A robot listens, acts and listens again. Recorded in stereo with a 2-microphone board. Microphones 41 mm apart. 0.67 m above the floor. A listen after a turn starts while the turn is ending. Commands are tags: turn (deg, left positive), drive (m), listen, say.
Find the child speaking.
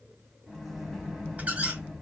<listen/>
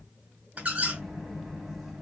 <listen/>
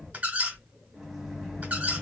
<turn deg="-65"/>
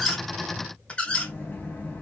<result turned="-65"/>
<listen/>
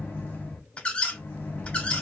<listen/>
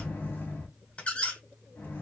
<turn deg="-50"/>
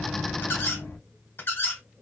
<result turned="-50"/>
<listen/>
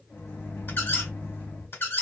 <listen/>
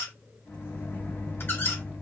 <say>I heard a child speaking from this way, but can't make it out now.</say>